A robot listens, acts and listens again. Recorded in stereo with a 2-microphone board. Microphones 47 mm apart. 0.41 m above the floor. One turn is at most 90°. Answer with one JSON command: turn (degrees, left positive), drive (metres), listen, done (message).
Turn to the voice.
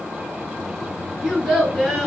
{"turn": 30}
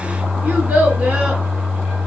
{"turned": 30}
{"turn": -25}
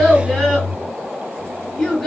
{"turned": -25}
{"turn": 15}
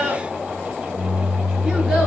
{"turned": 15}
{"done": "Found it: a child speaking, straight ahead."}